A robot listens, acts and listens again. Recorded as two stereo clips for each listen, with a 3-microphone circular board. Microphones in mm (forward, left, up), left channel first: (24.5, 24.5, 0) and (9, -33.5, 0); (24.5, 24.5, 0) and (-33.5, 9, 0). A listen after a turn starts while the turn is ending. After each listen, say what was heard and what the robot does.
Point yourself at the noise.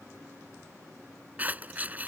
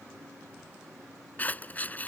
The scissors: 45° right. Turn 45° right.
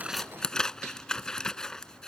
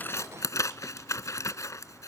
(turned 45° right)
Found it: scissors, straight ahead.